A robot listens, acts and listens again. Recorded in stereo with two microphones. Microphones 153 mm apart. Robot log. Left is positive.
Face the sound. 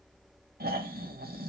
cmd yaw -90
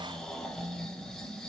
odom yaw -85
end: Facing the snoring, under 1 m away.